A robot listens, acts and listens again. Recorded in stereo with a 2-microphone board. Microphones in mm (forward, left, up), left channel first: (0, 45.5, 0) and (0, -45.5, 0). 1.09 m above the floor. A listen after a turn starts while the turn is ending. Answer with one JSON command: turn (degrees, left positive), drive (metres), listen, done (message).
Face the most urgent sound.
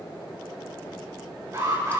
{"turn": -45}
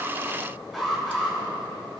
{"done": "Facing the alarm, over 4 m away."}